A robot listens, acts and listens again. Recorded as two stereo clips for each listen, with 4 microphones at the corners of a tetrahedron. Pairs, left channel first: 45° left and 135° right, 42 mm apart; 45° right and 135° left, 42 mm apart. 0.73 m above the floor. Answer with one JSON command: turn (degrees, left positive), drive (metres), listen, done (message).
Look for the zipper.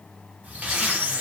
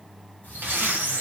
{"turn": 175}
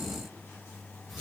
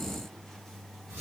{"listen": true}
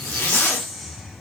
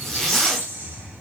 {"turn": 35}
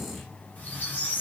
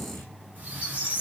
{"listen": true}
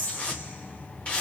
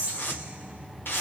{"turn": -15}
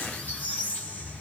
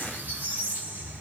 {"listen": true}
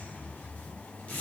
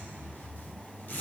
{"done": "Found it: a zipper, straight ahead."}